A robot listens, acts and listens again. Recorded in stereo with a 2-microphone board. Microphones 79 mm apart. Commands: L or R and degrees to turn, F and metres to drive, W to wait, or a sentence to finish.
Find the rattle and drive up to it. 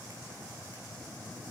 W
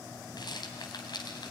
L65
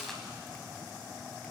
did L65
F1.0
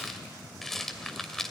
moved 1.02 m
F1.0
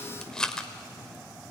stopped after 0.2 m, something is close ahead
L10
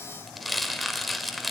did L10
I am next to the rattle.